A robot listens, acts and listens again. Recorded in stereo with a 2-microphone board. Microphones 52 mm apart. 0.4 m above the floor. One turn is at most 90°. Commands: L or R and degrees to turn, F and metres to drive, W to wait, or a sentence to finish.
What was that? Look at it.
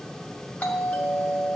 L25
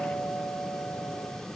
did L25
L10
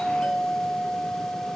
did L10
Facing the doorbell.